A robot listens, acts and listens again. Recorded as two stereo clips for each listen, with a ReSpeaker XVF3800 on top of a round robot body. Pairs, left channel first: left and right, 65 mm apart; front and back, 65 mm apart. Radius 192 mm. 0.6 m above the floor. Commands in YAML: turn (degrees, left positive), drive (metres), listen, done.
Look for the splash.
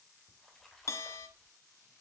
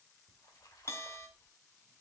done: "Facing the splash."